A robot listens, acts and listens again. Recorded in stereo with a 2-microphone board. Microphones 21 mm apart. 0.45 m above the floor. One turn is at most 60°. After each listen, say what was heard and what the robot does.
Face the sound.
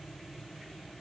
Keep listening.
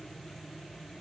Keep listening.
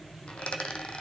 The dropped coin: about 60° left or 120° left. Turn 60° left.
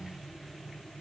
Keep listening.
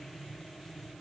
I heard a dropped coin, but can't make it out now. It was about straight ahead or 60° left.